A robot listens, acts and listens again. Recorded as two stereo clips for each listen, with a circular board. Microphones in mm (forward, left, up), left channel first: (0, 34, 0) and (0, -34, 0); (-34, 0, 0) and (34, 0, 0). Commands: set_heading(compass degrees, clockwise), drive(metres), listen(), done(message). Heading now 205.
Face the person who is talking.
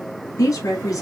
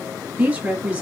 set_heading(145)
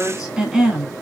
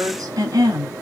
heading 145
set_heading(160)
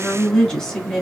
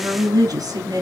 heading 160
done("Found it: a woman speaking, straight ahead, 1 to 2 m away.")